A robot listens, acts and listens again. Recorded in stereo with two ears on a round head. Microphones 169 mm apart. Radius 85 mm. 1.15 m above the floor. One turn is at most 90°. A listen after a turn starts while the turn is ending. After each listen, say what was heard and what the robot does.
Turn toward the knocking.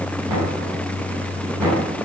Turn 30° right.
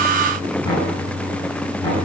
So it is at 20° left. Turn 20° left.
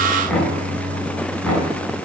Facing the knocking, over 4 m away.